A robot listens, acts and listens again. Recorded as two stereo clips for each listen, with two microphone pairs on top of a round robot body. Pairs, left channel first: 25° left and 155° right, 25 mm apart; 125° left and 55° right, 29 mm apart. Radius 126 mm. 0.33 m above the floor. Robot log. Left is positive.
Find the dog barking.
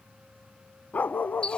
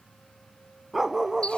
note: The dog barking: 20° left.
cmd yaw +20
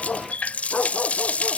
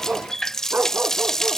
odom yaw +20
note: The dog barking is now 35° right.
cmd yaw -35
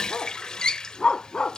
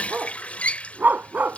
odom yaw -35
note: The dog barking is now 40° right.
cmd yaw -40
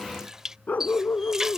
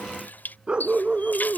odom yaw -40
end: Facing the dog barking.